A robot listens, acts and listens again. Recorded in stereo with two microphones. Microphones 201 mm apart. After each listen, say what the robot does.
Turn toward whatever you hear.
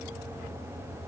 Keep listening.
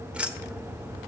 Turn 30° right.
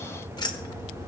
Turn 25° left.
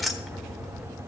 Facing the keys jangling, 1 to 2 m away.